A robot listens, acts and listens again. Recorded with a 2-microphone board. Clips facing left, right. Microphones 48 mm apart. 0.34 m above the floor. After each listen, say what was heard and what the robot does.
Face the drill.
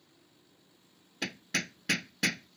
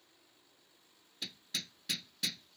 Keep listening.
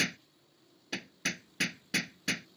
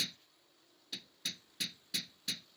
Keep listening.
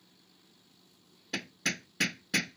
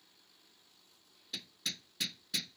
I can't make out a drill to turn to.